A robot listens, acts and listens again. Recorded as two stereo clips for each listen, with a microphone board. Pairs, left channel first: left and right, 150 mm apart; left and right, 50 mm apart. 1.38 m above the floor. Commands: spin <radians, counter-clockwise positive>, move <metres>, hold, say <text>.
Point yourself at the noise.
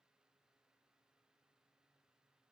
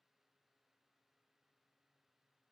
hold
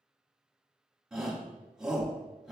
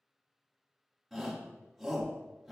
spin -0.52
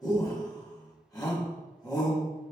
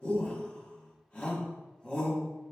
spin 0.44
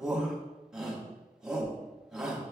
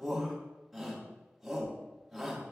say Facing the shout.